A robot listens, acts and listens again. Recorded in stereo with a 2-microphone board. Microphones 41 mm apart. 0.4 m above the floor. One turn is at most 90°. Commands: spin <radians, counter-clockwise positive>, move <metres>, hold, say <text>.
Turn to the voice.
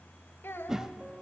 spin 1.13
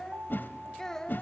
spin 0.26
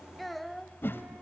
say Found it: a child speaking, straight ahead.